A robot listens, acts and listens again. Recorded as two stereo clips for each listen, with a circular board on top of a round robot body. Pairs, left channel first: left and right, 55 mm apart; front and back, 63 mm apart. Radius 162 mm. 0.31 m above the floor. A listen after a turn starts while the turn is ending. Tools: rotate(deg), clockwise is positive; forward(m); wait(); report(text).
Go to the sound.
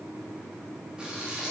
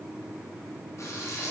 rotate(20)
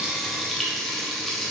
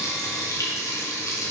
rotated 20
forward(1.0)
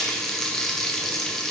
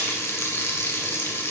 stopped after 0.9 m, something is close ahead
rotate(-10)
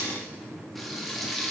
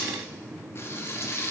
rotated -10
report("Arrived at the frying, straight ahead.")